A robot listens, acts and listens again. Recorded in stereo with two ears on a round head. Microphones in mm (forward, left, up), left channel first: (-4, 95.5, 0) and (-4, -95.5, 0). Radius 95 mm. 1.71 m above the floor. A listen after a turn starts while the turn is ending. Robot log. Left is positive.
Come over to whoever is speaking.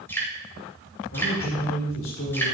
note: The man speaking: about 65° left or 115° left.
cmd yaw +65
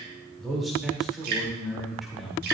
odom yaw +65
cmd fwd 1.0
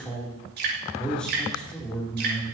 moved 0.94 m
cmd fwd 1.0
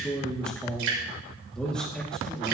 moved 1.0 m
cmd fwd 1.0
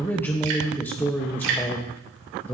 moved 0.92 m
note: The man speaking is now 10° left.
cmd yaw +10
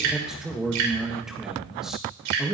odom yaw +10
cmd fwd 1.0
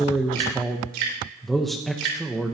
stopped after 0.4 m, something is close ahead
end: Arrived at the man speaking, straight ahead.